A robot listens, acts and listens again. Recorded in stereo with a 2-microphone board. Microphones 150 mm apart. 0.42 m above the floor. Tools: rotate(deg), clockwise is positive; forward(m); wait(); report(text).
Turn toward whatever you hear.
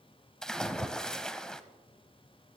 rotate(-30)
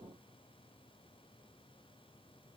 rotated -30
wait()
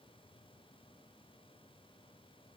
report("I heard a splash, but can't make it out now. It was about 25° right or 145° left.")